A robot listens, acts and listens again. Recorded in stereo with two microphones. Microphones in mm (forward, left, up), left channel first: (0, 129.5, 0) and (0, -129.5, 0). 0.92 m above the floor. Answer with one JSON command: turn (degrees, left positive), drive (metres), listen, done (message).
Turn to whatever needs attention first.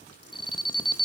{"turn": 20}
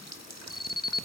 {"turn": 140}
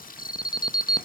{"turn": 15}
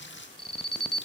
{"done": "Found it: an alarm, straight ahead, under 1 m away."}